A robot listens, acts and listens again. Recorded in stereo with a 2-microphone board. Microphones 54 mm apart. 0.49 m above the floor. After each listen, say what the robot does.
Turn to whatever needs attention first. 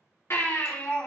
Turn 55° left.
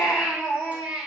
Facing the baby crying.